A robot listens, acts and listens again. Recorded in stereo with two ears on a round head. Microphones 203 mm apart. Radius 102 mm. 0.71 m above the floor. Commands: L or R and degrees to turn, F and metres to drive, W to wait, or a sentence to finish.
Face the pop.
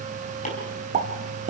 R35
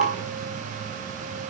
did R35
W
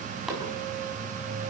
I heard a pop, but can't make it out now. It was about straight ahead or 110° right.